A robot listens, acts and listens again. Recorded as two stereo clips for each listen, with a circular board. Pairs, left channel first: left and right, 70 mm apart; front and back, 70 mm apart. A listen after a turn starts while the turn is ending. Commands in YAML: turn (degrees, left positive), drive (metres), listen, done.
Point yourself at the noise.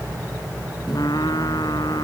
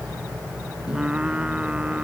turn: 105
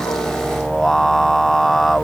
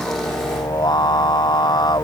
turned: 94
done: "Facing the singing."